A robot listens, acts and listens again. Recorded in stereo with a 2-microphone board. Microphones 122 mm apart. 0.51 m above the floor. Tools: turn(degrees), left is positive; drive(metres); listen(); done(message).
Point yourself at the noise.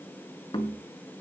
turn(degrees=40)
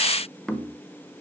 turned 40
done("Found it: knocking, straight ahead, 1 to 2 m away.")